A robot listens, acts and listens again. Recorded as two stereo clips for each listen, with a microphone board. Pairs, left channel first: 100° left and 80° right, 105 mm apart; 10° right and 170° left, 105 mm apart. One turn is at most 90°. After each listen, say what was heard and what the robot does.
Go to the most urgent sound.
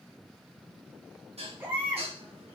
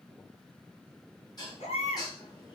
Drive 1.0 m forward.
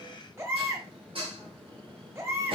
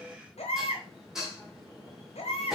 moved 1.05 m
The baby crying is now 10° right. Turn 10° right.
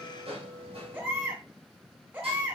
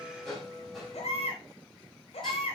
Drive 1.0 m forward.
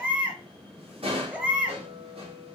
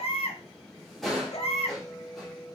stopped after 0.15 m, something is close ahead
I am next to the baby crying.